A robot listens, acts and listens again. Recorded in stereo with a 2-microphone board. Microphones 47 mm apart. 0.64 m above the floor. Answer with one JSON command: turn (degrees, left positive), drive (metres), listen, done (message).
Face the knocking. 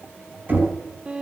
{"turn": -35}
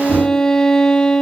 {"listen": true}
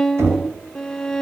{"turn": -105}
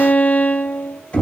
{"turn": 25}
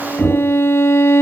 {"turn": -10}
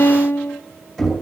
{"done": "Found it: knocking, straight ahead."}